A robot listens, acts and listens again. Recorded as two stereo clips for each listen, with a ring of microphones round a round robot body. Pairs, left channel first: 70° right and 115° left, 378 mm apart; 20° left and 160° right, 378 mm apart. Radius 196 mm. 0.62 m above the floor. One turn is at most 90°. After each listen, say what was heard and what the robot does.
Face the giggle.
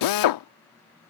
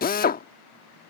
Keep listening.
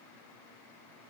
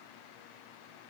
Keep listening.
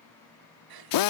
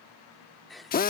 The giggle: 110° left. Turn 90° left.
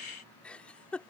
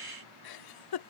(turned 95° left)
The giggle is now 20° left. Turn 20° left.
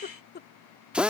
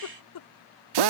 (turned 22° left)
Found it: a giggle, straight ahead.